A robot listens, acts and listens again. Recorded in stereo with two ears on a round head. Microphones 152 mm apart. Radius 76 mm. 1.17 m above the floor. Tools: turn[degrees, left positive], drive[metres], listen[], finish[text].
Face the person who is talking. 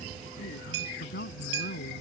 Thought: The man speaking: about 55° left or 125° left.
Action: turn[55]
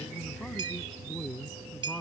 Action: finish[Found it: a man speaking, straight ahead.]